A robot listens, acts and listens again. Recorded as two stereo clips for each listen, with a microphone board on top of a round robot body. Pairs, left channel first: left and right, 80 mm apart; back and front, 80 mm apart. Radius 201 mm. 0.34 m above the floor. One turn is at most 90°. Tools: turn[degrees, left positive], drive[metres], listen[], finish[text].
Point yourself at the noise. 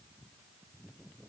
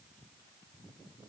Action: listen[]
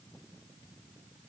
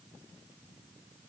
Action: listen[]
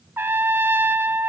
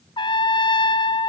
Thought: The trumpet: 155° right.
Action: turn[-90]
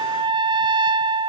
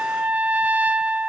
Thought: The trumpet is now 70° right.
Action: turn[-70]
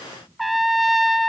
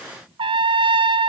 Action: finish[Found it: a trumpet, straight ahead, under 1 m away.]